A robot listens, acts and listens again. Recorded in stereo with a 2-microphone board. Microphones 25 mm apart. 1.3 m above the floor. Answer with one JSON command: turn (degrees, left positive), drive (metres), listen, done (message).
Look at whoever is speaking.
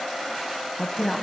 {"turn": 30}
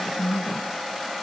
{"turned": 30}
{"turn": 145}
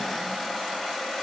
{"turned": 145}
{"listen": true}
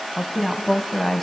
{"done": "Found it: a woman speaking, straight ahead, 1 to 2 m away."}